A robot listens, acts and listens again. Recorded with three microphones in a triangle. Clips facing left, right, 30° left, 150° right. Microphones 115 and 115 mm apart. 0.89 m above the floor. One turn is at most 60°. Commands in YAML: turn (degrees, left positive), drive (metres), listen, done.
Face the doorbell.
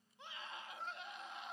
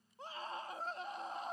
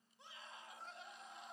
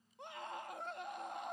listen: true
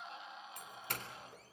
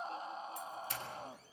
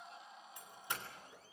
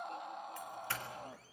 turn: 60
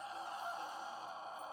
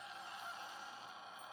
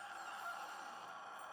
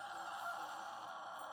turn: 40
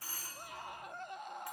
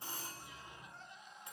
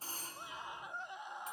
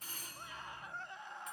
turn: -25
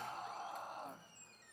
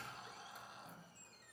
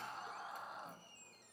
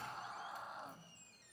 listen: true
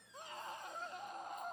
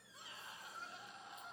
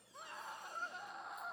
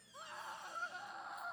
listen: true
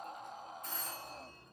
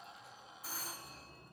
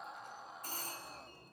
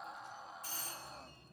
done: "Facing the doorbell, 2 to 4 m away."